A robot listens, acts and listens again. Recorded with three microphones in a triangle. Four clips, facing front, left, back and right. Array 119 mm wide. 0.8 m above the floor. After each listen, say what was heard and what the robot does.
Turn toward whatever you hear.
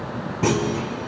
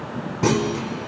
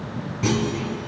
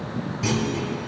The clunk: 55° left. Turn 55° left.
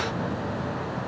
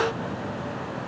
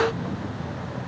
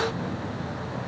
I heard a clunk from this way, but can't make it out now.